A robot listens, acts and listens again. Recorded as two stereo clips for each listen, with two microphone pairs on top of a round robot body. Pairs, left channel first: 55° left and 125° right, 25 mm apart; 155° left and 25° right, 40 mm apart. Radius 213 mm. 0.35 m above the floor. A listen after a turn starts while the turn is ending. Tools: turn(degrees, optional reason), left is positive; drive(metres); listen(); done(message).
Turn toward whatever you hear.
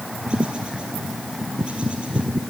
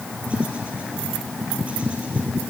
listen()
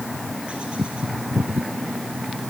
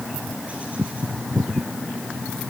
listen()
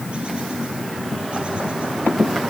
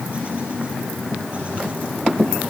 done("I can't make out anything.")